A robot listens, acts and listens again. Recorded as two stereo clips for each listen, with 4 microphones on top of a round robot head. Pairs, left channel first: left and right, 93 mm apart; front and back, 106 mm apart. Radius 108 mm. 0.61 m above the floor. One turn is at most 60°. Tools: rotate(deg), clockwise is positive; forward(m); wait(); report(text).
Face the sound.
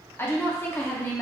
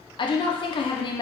rotate(-30)
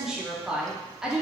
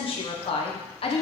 rotate(10)
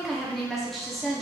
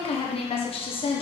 report("Found it: a woman speaking, straight ahead.")